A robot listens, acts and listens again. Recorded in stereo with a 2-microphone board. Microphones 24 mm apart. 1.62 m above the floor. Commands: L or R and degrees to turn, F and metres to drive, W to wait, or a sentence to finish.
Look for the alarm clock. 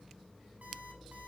W
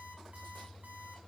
R70
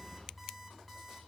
Facing the alarm clock, over 4 m away.